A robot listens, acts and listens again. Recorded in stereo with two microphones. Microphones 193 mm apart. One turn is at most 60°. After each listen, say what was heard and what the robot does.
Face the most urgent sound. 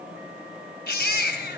The baby crying: about 50° left or 130° left. Turn 50° left.
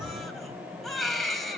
Facing the baby crying, 2 to 4 m away.